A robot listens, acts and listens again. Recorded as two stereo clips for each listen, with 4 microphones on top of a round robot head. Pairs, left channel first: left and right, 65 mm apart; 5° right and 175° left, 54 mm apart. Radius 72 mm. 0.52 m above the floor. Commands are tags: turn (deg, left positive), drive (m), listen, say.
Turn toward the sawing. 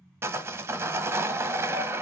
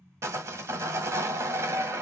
<turn deg="-140"/>
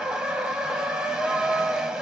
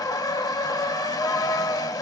<turn deg="-10"/>
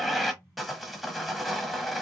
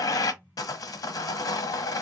<say>Facing the sawing.</say>